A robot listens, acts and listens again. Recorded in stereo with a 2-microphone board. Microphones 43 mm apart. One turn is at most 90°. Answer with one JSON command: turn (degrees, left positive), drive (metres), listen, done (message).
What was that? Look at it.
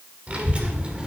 {"turn": -25}
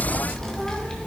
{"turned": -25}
{"turn": 15}
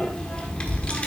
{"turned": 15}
{"turn": 30}
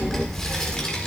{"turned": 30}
{"turn": 15}
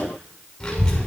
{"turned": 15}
{"turn": 20}
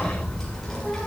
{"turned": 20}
{"turn": 10}
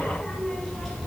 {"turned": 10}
{"done": "Found it: a child speaking, straight ahead."}